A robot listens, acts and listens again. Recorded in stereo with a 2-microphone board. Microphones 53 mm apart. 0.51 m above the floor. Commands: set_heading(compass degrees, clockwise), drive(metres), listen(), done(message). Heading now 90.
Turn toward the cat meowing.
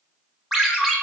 listen()
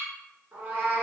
set_heading(120)
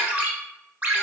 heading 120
listen()
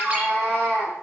set_heading(110)
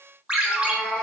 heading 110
done("Found it: a cat meowing, straight ahead, 2 to 4 m away.")